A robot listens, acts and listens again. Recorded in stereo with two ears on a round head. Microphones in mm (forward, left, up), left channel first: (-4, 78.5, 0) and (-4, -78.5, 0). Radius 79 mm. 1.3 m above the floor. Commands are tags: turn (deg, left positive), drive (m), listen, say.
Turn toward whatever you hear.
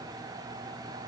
<listen/>
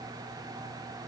<listen/>
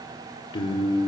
<turn deg="25"/>
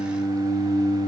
<turn deg="130"/>
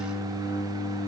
<turn deg="-15"/>
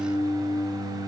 <say>Facing the singing.</say>